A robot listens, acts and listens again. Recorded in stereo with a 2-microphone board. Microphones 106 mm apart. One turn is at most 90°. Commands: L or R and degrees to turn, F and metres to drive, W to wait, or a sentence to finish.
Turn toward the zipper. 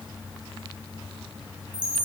W
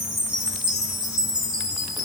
W
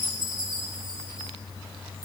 I can't make out a zipper, only a chime.